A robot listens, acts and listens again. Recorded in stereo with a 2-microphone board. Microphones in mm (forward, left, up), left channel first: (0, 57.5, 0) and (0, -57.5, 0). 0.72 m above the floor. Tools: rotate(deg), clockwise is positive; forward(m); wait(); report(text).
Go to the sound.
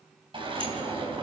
rotate(45)
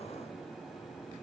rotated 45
wait()
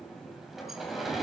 forward(1.0)
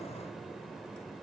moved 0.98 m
wait()
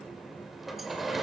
forward(1.0)
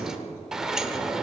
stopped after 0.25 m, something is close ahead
report("I am next to the sliding door.")